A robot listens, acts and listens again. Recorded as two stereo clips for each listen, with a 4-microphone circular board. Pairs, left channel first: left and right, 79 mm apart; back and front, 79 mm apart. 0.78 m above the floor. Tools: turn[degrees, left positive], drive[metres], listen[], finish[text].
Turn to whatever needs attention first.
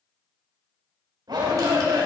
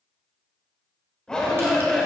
Thought: The shout: 100° right.
Action: turn[-100]
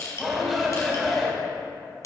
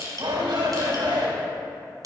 Action: finish[Found it: a shout, straight ahead, 2 to 4 m away.]